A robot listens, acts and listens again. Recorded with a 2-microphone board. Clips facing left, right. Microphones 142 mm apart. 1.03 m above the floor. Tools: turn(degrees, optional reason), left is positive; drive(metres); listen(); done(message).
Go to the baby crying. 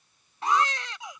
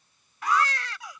turn(degrees=20, reason="The baby crying: about 20° left or 160° left.")
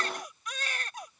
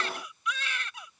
turn(degrees=135, reason="So it is at 135° left.")
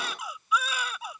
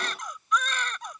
drive(metres=1.0)
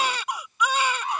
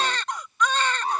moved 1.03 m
turn(degrees=10, reason="The baby crying is now 10° left.")
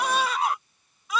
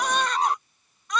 drive(metres=1.0)
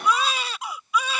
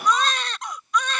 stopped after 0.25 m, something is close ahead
done("I am next to the baby crying.")